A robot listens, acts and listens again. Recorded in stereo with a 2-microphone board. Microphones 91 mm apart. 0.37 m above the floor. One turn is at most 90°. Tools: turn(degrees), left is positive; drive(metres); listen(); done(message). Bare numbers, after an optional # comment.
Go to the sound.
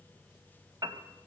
# The piano: about 45° right or 135° right.
turn(-45)
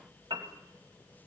# So it is at 80° right.
turn(-80)
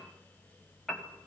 drive(1.0)
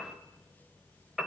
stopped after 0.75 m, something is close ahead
done("Arrived at the piano, straight ahead.")